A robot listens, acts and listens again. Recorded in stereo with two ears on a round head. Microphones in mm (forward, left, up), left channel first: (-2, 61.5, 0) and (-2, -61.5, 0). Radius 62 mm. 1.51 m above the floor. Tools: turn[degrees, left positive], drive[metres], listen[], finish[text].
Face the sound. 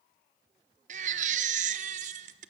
Thought: The baby crying: about 55° right or 125° right.
Action: turn[-55]
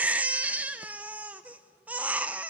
Thought: So it is at 10° right.
Action: turn[-10]
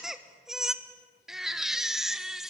Action: finish[Found it: a baby crying, straight ahead.]